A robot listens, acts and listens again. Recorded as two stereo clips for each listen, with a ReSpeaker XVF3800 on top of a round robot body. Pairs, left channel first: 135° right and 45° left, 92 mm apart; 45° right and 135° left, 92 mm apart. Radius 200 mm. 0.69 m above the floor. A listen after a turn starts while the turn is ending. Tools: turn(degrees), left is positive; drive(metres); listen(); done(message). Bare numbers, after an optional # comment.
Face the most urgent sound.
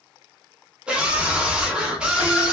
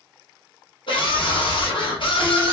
# The scream: 35° right.
turn(-35)
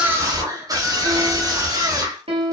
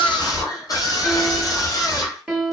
done("Found it: a scream, straight ahead.")